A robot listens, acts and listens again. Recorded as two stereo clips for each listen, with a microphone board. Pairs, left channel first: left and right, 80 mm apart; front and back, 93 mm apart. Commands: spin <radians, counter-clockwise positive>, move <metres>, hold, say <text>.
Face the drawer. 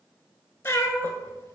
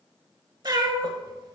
hold
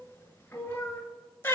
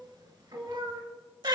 hold
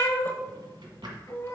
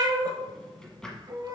spin -1.48
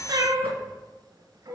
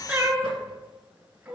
hold
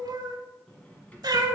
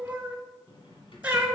spin 0.35
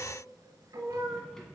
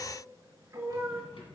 say Found it: a drawer, straight ahead.